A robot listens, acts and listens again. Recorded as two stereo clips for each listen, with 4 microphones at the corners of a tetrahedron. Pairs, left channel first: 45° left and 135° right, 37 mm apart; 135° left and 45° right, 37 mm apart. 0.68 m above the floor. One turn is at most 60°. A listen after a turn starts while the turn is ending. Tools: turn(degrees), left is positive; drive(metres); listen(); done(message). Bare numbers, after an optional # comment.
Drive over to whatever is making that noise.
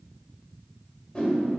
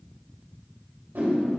# The whoosh: 15° right.
turn(-15)
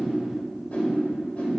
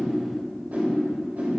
drive(1.0)
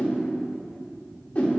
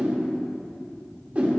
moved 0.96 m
drive(1.0)
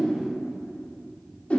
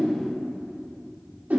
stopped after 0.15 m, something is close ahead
done("Arrived at the whoosh, straight ahead.")